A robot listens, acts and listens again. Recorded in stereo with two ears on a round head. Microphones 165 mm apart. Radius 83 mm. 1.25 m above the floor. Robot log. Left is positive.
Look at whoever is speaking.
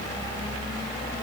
cmd idle
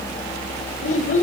note: The child speaking: about 45° left or 135° left.
cmd yaw +45
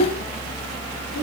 cmd idle
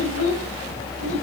cmd idle
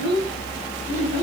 note: So it is at 100° left.
cmd yaw +100
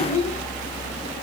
cmd idle
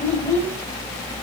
cmd idle
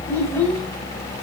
end: I heard a child speaking from this way, but can't make it out now.